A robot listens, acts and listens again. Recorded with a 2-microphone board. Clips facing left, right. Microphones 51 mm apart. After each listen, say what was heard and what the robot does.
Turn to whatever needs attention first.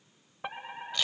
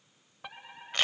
The fire alarm: about 20° left or 160° left. Turn 20° left.
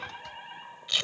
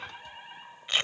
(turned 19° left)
Found it: a fire alarm, straight ahead.